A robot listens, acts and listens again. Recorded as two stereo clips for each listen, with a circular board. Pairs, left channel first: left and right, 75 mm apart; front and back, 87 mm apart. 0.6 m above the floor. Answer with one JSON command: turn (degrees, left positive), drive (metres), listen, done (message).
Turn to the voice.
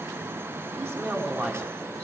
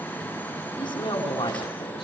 {"turn": -30}
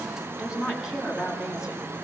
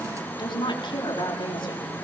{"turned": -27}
{"turn": -10}
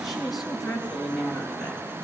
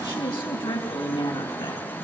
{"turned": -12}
{"done": "Facing the woman speaking, over 4 m away."}